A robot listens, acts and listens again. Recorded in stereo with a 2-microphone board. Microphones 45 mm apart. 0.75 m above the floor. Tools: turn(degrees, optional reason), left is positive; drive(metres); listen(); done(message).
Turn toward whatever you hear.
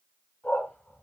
turn(degrees=50, reason="The dog barking: about 50° left or 130° left.")
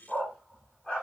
turn(degrees=25, reason="So it is at 25° left.")
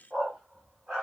turn(degrees=15, reason="The dog barking is now 15° left.")
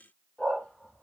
turn(degrees=15, reason="The dog barking is now 15° left.")
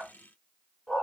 turn(degrees=15, reason="The dog barking is now 15° left.")
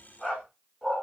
done("Facing the dog barking.")